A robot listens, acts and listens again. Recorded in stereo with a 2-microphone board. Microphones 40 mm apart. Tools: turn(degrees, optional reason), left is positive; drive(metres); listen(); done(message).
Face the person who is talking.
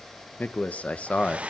turn(degrees=30, reason="The man speaking: about 30° left or 150° left.")
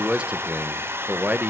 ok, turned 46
turn(degrees=-45, reason="So it is at 45° right.")
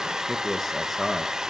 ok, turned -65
done("Facing the man speaking.")